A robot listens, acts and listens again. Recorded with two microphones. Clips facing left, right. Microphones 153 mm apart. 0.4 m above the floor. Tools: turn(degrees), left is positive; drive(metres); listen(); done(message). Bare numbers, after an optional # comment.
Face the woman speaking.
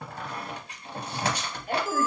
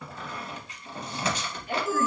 # The woman speaking: about 45° left or 135° left.
turn(45)
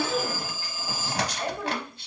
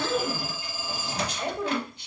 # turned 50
# So it is at 20° right.
turn(-20)
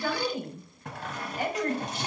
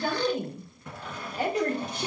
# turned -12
# The woman speaking is now 40° right.
turn(-40)
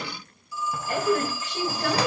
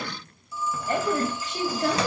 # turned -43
# The woman speaking is now 20° right.
turn(-20)
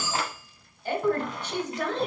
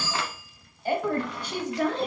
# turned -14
# The woman speaking is now 10° right.
turn(-10)
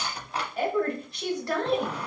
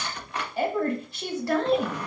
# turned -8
done("Found it: a woman speaking, straight ahead.")